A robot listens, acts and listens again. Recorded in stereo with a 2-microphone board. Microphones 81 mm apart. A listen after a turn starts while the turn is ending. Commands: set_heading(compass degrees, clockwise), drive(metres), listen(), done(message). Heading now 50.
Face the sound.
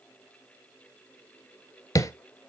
set_heading(5)
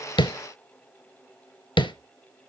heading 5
set_heading(275)
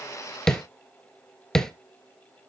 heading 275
done("Facing the tapping, under 1 m away.")